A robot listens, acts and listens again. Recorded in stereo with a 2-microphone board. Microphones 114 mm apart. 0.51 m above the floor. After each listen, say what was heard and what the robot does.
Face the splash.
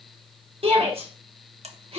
Keep listening.
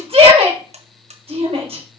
Keep listening.
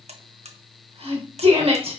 I can't make out a splash, only a buzzer and a shout.